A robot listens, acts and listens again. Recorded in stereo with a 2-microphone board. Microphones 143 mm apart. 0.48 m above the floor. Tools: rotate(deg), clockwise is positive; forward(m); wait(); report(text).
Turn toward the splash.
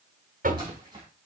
rotate(30)
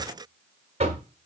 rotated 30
wait()
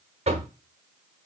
report("I heard a splash, but can't make it out now. It was about straight ahead or 120° right.")